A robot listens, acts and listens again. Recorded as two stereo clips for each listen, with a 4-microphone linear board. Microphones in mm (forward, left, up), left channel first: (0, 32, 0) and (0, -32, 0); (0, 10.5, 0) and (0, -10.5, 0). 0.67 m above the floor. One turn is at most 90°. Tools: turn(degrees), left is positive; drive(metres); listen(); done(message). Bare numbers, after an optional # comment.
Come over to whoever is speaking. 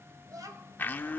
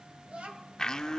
# The child speaking: about 60° right or 120° right.
turn(-60)
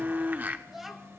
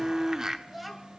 drive(1.0)
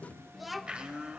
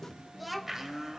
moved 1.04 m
drive(1.0)
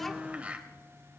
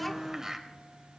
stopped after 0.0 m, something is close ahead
listen()
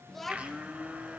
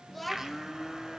done("Arrived at the child speaking, straight ahead.")